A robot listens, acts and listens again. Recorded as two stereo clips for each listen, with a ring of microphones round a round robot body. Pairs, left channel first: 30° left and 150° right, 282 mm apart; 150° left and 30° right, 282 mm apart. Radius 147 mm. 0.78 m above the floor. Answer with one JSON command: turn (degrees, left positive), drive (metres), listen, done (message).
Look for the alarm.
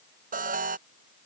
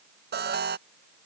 {"turn": -85}
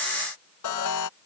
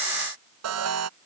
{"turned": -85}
{"done": "Facing the alarm."}